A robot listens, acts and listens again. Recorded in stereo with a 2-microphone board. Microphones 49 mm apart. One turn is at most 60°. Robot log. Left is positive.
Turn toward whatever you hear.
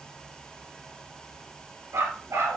note: The dog barking: about 65° right or 115° right.
cmd yaw -60
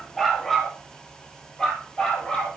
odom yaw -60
note: So it is at 20° left.
cmd yaw +20
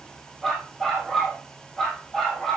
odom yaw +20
note: The dog barking is now 10° left.
cmd yaw +10
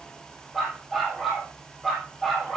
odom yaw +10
end: Found it: a dog barking, straight ahead, 2 to 4 m away.